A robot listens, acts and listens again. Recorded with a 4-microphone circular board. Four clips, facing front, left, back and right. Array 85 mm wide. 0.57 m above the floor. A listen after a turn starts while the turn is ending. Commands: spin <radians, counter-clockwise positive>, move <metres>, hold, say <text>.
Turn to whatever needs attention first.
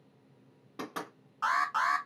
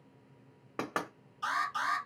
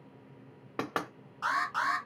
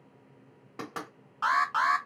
spin -1.31
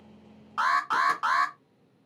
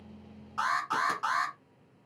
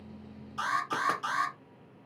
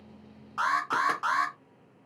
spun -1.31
say Facing the alarm, 1 to 2 m away.